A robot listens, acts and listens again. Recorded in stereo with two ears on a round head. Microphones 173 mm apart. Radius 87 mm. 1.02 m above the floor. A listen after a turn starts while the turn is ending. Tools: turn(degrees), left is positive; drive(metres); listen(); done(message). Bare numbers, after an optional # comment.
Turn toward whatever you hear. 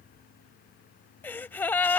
turn(30)
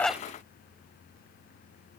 listen()
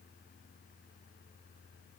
done("I heard a gasp, but can't make it out now. It was about 20° right or 140° left.")